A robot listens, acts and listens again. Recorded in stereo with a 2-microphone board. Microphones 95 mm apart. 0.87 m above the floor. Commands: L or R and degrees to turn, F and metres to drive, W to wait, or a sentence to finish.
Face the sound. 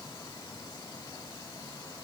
W
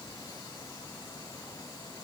W
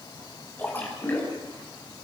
L20
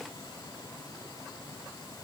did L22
W
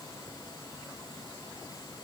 I heard a splash, but can't make it out now. It was about straight ahead or 140° left.